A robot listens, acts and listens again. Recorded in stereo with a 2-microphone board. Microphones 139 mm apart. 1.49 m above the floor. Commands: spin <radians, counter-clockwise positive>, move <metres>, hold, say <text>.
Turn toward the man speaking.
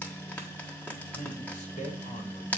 spin 1.05
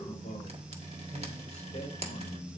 spin 1.13
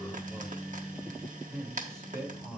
say Facing the man speaking.